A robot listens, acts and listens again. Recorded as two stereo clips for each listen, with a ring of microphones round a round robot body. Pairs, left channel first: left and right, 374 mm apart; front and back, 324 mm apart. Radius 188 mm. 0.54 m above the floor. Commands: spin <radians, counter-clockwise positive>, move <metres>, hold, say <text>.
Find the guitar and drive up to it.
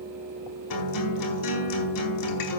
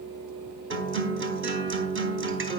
spin 2.18
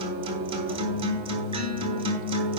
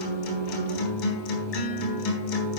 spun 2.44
spin -0.26
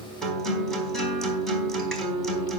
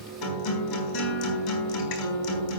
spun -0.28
move 1.0
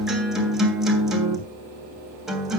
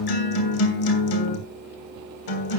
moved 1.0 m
move 1.0
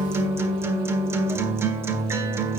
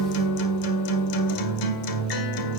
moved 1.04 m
move 1.0
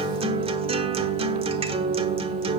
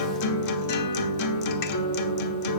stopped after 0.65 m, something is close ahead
spin -0.26
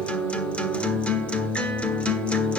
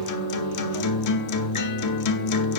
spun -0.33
say I am next to the guitar.